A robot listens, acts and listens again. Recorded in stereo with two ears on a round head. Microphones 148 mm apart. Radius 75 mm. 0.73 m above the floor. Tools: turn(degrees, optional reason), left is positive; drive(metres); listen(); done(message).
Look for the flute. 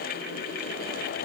listen()
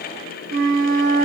turn(degrees=-60, reason="The flute: about 60° right or 120° right.")
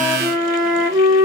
turn(degrees=-20, reason="So it is at 20° right.")
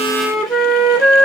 done("Facing the flute, 1 to 2 m away.")